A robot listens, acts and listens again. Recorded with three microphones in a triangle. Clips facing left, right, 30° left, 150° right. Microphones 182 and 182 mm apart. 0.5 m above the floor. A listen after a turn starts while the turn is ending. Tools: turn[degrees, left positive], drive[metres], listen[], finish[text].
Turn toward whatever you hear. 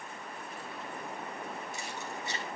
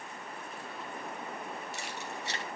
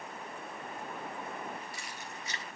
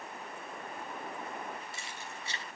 Thought: The keys jangling: 90° right.
Action: turn[-90]
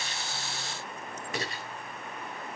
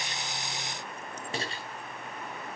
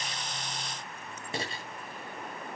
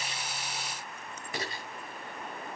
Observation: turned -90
Thought: The keys jangling is now 30° right.
Action: turn[-30]
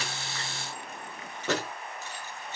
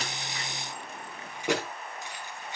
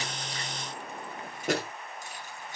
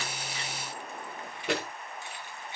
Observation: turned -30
Thought: The keys jangling is now 15° right.
Action: turn[-15]
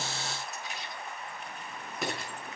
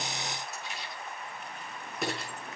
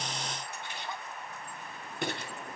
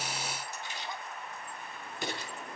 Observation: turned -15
Action: finish[Facing the keys jangling.]